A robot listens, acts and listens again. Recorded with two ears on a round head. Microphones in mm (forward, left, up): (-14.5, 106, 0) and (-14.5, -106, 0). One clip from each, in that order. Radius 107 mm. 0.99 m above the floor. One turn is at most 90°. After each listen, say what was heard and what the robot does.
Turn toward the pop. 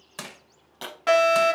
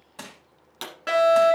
The pop: about 25° right or 155° right. Turn 25° right.
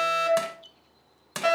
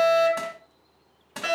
Keep listening.
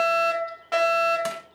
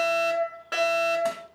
I heard a pop, but can't make it out now. It was about straight ahead or 130° right.